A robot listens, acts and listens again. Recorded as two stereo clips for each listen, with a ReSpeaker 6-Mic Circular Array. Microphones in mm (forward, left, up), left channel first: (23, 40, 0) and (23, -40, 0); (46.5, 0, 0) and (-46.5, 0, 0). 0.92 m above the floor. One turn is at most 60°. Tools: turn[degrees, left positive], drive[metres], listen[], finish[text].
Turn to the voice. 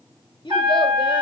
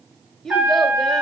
Thought: The child speaking: 90° left.
Action: turn[60]
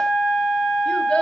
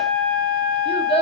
Thought: The child speaking is now 10° left.
Action: turn[10]
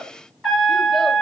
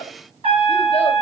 Action: finish[Facing the child speaking.]